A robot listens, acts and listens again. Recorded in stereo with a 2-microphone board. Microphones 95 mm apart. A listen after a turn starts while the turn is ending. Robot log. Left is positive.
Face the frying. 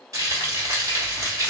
note: The frying: about 35° right or 145° right.
cmd yaw -35
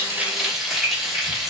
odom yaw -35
end: Facing the frying.